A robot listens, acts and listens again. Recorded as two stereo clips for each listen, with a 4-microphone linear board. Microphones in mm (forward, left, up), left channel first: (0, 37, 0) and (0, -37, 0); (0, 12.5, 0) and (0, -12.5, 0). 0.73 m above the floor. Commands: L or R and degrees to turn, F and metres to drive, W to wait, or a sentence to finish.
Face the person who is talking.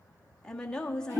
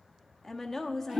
L30
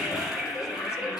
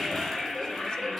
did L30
W
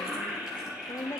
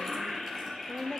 L135
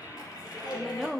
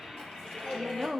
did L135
Facing the woman speaking, 1 to 2 m away.